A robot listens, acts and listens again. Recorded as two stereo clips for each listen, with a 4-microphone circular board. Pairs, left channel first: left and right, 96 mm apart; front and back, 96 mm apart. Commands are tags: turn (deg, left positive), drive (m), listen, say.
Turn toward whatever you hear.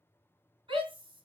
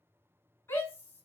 <turn deg="-65"/>
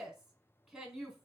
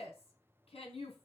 <say>Facing the shout.</say>